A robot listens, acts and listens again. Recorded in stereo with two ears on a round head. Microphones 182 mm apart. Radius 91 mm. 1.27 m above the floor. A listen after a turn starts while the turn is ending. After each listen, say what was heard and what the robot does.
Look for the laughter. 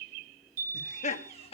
The laughter: about 30° left or 150° left. Turn 30° left.
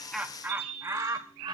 So it is at 25° right. Turn 25° right.
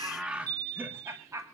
The laughter is now 15° right. Turn 15° right.
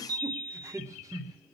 The laughter is now 20° right. Turn 20° right.
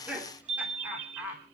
The laughter is now 10° right. Turn 10° right.
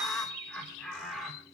Found it: laughter, straight ahead.